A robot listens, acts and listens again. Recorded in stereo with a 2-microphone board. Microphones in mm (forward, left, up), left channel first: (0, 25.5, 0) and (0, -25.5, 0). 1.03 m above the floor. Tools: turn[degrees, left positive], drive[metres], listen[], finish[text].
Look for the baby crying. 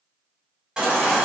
Action: turn[-30]
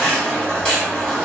Thought: So it is at 15° left.
Action: turn[15]
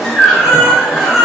Action: finish[Facing the baby crying.]